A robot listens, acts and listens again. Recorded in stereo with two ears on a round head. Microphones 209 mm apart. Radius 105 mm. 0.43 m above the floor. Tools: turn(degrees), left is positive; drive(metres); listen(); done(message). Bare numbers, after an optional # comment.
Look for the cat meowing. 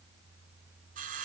listen()
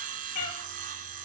# The cat meowing: about 70° left or 110° left.
turn(70)
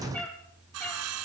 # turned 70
# So it is at 10° left.
turn(10)
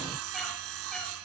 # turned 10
listen()
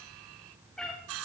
done("Facing the cat meowing, over 4 m away.")